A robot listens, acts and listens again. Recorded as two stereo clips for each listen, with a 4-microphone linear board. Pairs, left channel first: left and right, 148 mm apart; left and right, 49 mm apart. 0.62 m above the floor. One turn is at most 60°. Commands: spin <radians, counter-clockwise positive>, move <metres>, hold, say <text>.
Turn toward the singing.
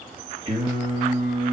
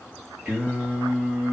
spin -0.52
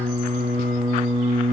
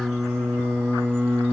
spin -1.05
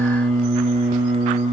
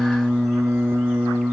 spin -0.79
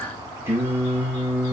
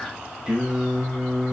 spin -0.17
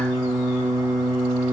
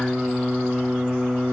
say Found it: singing, straight ahead.